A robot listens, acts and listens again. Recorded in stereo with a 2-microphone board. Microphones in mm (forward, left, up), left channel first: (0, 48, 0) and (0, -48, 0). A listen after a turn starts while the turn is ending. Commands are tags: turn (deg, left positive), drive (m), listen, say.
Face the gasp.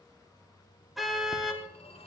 <listen/>
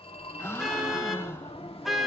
<turn deg="25"/>
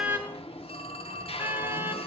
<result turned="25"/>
<listen/>
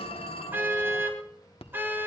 <say>I heard a gasp, but can't make it out now. It was about straight ahead or 130° left.</say>